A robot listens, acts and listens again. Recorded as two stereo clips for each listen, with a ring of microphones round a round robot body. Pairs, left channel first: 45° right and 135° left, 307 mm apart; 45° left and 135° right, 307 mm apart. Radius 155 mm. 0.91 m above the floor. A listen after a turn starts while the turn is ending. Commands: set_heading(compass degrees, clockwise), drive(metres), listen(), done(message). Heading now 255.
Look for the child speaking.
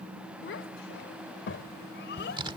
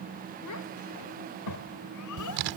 set_heading(245)
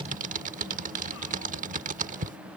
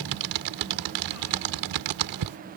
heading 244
listen()
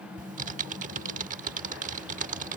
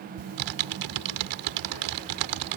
listen()
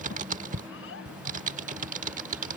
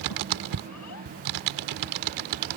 done("Facing the child speaking.")